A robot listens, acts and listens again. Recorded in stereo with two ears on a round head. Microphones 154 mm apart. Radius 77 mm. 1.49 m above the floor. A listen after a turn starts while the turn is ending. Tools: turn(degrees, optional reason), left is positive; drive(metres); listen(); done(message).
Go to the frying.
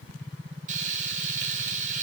turn(degrees=-50, reason="The frying: about 50° right or 130° right.")
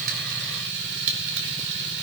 turn(degrees=-80, reason="So it is at 80° right.")
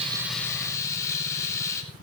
turn(degrees=20, reason="The frying is now 20° left.")
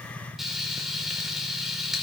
drive(metres=1.0)
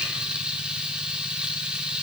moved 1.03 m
drive(metres=1.0)
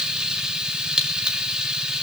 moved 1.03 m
drive(metres=1.0)
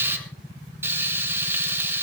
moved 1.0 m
turn(degrees=-15, reason="The frying is now 15° right.")
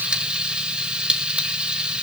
drive(metres=1.0)
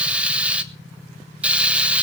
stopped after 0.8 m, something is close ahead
turn(degrees=-10, reason="The frying is now 10° right.")
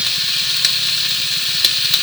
done("Arrived at the frying, straight ahead.")